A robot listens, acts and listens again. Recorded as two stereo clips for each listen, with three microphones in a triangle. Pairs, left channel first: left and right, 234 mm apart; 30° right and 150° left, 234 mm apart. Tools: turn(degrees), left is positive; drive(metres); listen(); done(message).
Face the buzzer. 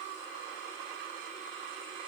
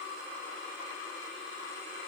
listen()
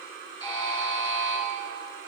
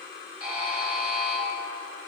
turn(degrees=160)
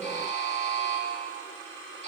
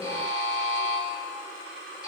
turn(degrees=-30)
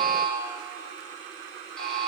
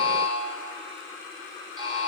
done("Facing the buzzer.")